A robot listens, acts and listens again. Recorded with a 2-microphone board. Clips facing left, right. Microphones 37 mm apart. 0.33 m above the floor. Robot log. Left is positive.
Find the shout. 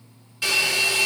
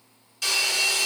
cmd idle
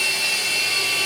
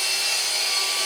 cmd idle
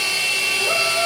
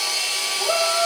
note: The shout: about 25° right or 155° right.
cmd yaw -25
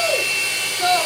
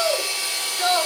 end: Found it: a shout, straight ahead.